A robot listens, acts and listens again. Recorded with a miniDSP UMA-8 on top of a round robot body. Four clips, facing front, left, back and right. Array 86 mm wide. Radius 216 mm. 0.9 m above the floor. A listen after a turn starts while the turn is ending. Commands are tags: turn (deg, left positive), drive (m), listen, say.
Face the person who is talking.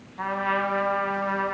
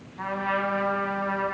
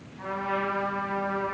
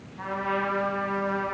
<listen/>
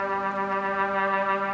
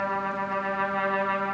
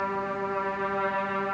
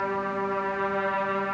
<listen/>
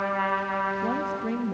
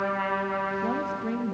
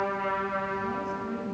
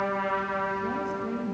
<turn deg="20"/>
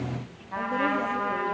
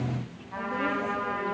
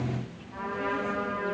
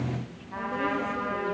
<listen/>
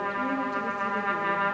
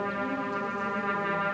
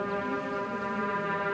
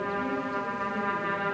<listen/>
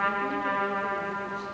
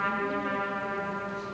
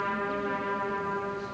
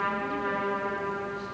<say>I heard a woman speaking from this way, but can't make it out now.</say>